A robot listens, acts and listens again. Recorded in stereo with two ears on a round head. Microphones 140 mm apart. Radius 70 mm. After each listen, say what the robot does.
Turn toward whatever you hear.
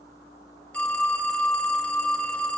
Turn 30° left.
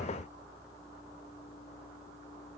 Keep listening.
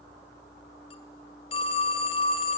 Turn 140° left.
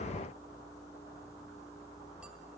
Keep listening.
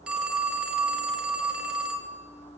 Found it: a phone ringing, straight ahead, 2 to 4 m away.